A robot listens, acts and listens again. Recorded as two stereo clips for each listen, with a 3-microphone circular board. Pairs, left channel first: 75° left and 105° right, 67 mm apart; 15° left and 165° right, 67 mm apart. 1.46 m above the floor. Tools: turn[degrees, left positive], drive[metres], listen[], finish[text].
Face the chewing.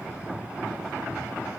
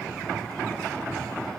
Action: listen[]
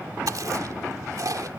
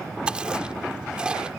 Thought: The chewing: 90° right.
Action: turn[-90]
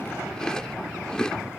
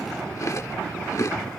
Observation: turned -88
Action: finish[Facing the chewing.]